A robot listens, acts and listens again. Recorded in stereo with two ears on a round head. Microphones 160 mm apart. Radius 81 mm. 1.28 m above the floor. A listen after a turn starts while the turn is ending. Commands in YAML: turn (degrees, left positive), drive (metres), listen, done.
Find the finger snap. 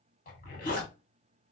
listen: true
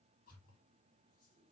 listen: true
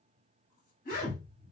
done: "I can't make out a finger snap, only a zipper."